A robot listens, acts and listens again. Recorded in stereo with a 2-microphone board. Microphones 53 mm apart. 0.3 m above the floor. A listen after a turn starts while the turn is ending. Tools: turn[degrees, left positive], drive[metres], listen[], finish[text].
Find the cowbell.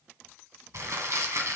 Action: listen[]
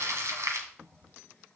Action: listen[]
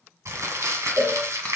Thought: The cowbell: about 25° right or 155° right.
Action: turn[-25]
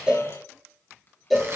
Action: finish[Found it: a cowbell, straight ahead, 1 to 2 m away.]